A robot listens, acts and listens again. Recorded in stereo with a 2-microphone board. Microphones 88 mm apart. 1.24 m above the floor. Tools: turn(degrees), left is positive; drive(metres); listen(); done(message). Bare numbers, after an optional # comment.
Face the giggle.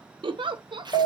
# The giggle: about 70° right or 110° right.
turn(-70)
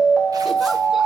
listen()
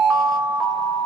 listen()
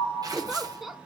done("Facing the giggle, under 1 m away.")